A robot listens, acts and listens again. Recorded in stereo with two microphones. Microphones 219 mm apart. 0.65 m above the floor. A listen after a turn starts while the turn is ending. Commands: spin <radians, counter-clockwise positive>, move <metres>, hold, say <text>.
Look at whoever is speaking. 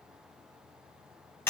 hold
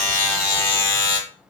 hold
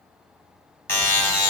say I can't make out anyone speaking to turn to.